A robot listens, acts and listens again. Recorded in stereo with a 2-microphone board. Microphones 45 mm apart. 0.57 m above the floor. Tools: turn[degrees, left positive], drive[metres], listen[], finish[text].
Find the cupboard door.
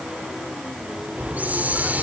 Action: listen[]
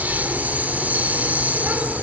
Action: listen[]
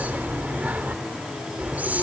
Action: finish[I can't make out a cupboard door to turn to.]